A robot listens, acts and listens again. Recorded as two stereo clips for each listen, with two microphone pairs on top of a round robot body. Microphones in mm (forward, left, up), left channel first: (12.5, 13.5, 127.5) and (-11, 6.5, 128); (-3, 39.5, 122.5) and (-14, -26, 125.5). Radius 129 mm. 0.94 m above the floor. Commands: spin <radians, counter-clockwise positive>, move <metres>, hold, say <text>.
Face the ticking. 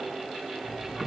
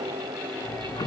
spin 1.75
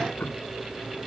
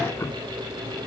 spin 0.35
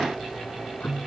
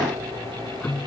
spin 0.17
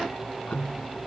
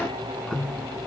say Facing the ticking.